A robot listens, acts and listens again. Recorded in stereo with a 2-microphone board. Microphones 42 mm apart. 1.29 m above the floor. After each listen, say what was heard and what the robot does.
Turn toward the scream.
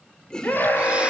The scream: about 50° left or 130° left. Turn 50° left.
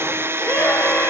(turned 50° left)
So it is at 80° left. Turn 80° left.
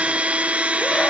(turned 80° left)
Keep listening.
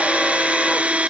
Keep listening.
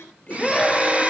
Facing the scream, over 4 m away.